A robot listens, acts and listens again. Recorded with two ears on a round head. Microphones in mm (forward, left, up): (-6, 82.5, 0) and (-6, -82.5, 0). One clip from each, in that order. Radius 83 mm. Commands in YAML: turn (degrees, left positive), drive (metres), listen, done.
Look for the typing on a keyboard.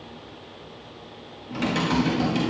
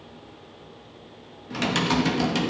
turn: -35
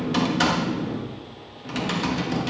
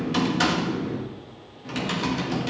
done: "Found it: typing on a keyboard, straight ahead."